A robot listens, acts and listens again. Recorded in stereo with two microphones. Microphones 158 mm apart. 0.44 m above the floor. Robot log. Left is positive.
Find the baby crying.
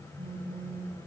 cmd idle
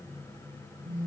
cmd idle
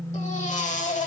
note: The baby crying: about 50° left or 130° left.
cmd yaw +50
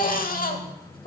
note: So it is at 75° left.
cmd yaw +75
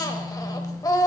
note: The baby crying is now 25° left.
cmd yaw +25
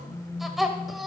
end: Facing the baby crying, 1 to 2 m away.